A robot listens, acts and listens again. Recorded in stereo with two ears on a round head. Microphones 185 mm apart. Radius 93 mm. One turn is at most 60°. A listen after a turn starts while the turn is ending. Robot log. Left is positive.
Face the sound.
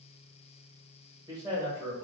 note: The man speaking: about 20° right or 160° right.
cmd yaw -20
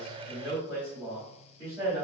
cmd yaw -30
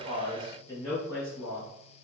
note: So it is at 15° left.
cmd yaw +15
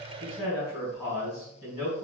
end: Facing the man speaking.